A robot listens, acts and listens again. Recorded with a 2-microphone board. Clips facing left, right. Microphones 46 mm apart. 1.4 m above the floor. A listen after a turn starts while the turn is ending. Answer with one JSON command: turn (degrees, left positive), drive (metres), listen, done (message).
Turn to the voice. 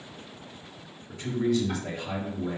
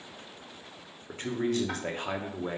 {"turn": -45}
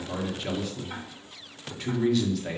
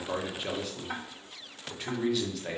{"done": "Facing the man speaking."}